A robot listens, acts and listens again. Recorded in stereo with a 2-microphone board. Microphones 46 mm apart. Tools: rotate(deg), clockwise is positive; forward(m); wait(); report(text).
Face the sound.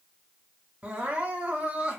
rotate(25)
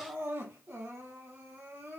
rotate(130)
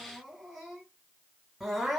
report("Facing the crying, 1 to 2 m away.")